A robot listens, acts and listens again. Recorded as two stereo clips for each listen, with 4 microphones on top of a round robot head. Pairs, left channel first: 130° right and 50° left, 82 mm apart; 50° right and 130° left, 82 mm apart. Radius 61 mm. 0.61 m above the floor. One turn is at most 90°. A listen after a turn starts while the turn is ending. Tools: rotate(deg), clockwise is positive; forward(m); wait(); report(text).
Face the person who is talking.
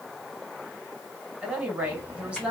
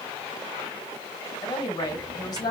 rotate(25)
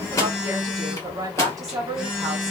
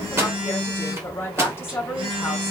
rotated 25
rotate(-10)
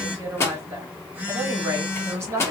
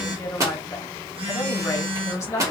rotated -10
report("Facing the woman speaking.")